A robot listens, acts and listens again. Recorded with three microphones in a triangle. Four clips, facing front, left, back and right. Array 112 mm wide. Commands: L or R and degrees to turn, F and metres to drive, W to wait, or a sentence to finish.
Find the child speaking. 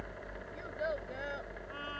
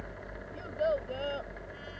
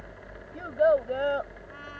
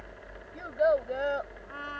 R155
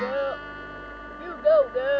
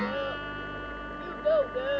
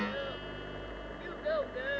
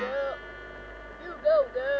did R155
R10
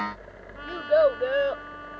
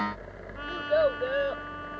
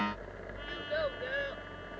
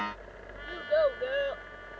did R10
Found it: a child speaking, straight ahead.